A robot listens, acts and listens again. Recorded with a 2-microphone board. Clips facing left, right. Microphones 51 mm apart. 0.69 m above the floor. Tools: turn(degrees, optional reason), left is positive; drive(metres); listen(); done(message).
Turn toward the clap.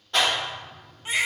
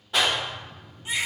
turn(degrees=-30)
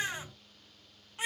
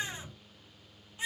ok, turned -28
listen()
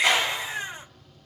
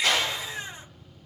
turn(degrees=20, reason="So it is at 20° left.")
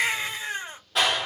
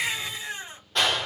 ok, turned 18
done("Found it: a clap, straight ahead.")